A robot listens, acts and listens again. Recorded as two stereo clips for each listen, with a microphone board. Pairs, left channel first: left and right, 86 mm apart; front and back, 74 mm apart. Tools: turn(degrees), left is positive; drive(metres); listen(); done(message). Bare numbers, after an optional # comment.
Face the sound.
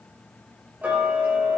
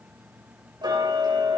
# The ticking: 160° right.
turn(-160)
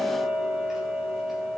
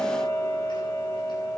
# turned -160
done("Found it: ticking, straight ahead.")